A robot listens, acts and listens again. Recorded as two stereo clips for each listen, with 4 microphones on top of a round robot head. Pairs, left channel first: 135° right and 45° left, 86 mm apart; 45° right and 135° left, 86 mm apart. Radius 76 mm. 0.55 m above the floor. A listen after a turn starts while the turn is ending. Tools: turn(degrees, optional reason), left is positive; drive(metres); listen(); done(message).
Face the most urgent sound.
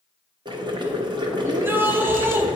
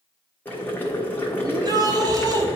turn(degrees=105, reason="The shout: 105° left.")
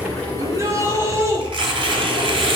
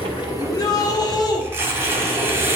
turn(degrees=-10, reason="The shout is now 10° right.")
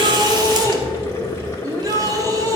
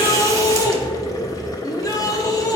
done("Facing the shout, 1 to 2 m away.")